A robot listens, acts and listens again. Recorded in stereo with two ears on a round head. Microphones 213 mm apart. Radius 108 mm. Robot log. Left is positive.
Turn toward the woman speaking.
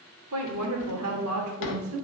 note: The woman speaking: about 65° right or 115° right.
cmd yaw -65
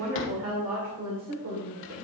note: So it is at 70° right.
cmd yaw -70
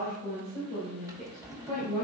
note: The woman speaking is now 20° right.
cmd yaw -20
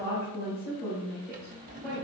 end: Found it: a woman speaking, straight ahead, 2 to 4 m away.